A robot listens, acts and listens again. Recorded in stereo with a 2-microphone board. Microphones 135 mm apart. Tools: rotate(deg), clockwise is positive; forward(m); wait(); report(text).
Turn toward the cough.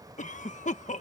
rotate(-65)
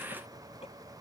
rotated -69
wait()
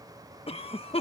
rotate(-45)
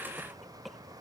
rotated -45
report("Facing the cough.")